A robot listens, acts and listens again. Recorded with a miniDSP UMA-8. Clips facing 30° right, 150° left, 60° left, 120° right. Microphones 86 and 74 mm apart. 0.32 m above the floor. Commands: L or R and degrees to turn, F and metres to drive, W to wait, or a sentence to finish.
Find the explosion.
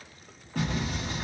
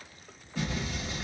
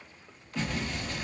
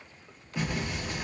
R45
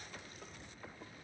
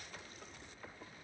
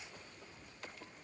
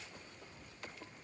I heard an explosion from this way, but can't make it out now.